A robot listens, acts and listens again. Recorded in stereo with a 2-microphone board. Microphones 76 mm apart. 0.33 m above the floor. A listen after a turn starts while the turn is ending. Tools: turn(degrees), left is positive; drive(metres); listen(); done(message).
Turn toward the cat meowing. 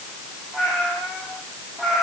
turn(degrees=30)
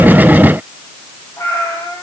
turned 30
turn(degrees=140)
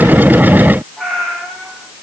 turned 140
done("Found it: a cat meowing, straight ahead.")